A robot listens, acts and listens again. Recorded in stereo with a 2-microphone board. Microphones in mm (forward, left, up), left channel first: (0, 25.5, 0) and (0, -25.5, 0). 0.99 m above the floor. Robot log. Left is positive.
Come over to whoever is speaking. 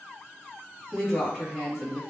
cmd yaw -30
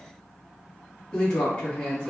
note: So it is at 15° left.
cmd yaw +15
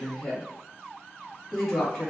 cmd fwd 1.0
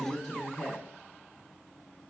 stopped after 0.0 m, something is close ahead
end: Something is in my way. I am facing the woman speaking but have not reached it.